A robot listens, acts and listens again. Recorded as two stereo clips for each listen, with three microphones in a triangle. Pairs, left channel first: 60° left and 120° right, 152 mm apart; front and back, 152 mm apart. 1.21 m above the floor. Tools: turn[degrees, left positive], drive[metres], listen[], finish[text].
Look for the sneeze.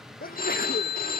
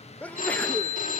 Thought: The sneeze: 80° left.
Action: turn[80]
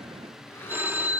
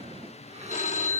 Action: finish[I heard a sneeze from this way, but can't make it out now.]